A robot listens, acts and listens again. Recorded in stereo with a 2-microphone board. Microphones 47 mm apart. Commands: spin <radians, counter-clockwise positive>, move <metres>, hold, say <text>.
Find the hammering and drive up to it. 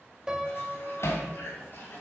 spin 1.13
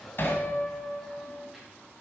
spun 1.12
spin 0.87
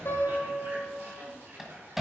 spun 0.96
move 1.0
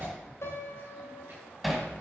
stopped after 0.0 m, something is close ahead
say Something is in my way. I am facing the hammering but have not reached it.